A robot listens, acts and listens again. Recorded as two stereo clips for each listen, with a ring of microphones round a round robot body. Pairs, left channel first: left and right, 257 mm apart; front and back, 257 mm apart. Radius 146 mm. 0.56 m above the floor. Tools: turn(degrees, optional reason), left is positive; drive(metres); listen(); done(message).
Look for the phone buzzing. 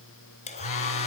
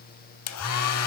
turn(degrees=55, reason="The phone buzzing: 55° left.")
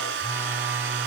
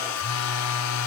done("Found it: a phone buzzing, straight ahead, 1 to 2 m away.")